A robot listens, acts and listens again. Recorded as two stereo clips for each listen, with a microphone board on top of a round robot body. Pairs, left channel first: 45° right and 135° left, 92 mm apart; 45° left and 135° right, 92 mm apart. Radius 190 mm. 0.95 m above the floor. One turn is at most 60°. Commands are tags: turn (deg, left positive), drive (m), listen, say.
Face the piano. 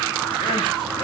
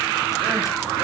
<listen/>
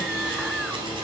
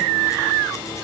<listen/>
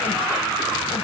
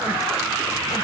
<say>I can't make out a piano.</say>